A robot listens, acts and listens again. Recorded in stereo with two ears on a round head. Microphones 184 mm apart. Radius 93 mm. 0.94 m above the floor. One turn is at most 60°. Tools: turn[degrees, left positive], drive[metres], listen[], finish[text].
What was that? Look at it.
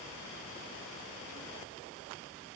Action: listen[]
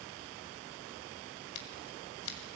Thought: The scissors: about 65° left or 115° left.
Action: turn[60]
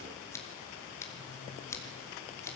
Thought: So it is at 15° left.
Action: turn[15]
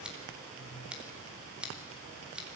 Action: finish[Found it: scissors, straight ahead, 2 to 4 m away.]